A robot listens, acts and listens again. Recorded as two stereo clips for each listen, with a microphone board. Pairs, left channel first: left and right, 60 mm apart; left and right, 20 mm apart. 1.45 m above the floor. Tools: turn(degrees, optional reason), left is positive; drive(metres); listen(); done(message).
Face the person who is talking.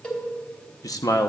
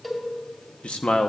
turn(degrees=90)
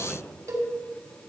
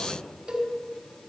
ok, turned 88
done("Facing the man speaking.")